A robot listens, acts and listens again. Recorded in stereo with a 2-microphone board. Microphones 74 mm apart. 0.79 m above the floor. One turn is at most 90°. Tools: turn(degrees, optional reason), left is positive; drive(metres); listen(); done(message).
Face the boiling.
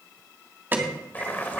turn(degrees=25, reason="The boiling: about 25° left or 155° left.")
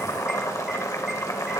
turn(degrees=90, reason="So it is at 130° left.")
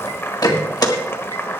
turn(degrees=35, reason="The boiling is now 35° left.")
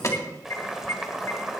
done("Found it: boiling, straight ahead.")